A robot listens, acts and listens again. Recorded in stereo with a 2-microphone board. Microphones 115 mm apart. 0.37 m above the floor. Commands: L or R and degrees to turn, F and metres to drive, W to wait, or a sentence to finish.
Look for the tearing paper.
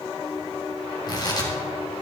L40
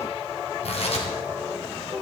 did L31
L110
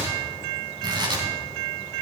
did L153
R45
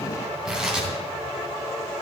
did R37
R10
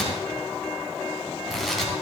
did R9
Facing the tearing paper, 2 to 4 m away.